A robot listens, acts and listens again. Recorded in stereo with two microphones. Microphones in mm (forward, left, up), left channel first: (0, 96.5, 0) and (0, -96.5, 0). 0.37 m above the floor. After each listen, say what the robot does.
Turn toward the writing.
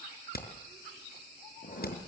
Turn 50° left.
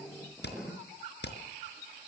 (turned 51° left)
Facing the writing.